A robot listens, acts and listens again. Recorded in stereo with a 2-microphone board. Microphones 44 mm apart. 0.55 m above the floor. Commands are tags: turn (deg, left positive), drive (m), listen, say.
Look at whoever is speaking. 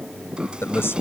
<turn deg="65"/>
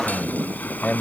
<turn deg="35"/>
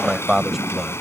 <say>Found it: a man speaking, straight ahead.</say>